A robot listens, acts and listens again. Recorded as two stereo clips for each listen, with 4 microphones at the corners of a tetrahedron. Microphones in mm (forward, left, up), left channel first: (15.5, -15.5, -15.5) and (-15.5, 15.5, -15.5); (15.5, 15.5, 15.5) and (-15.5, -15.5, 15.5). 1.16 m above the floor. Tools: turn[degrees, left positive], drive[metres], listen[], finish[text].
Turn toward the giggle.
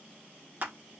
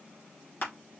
Action: listen[]
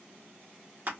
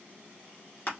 Action: listen[]
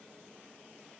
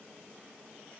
Action: finish[I can't make out a giggle, only crushing.]